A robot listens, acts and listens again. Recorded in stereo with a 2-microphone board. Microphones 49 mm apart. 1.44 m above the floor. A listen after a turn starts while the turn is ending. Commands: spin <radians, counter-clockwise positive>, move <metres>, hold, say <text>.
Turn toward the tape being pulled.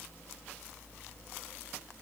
hold
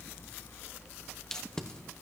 spin 0.26
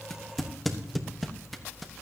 say Found it: tape being pulled, straight ahead, 1 to 2 m away.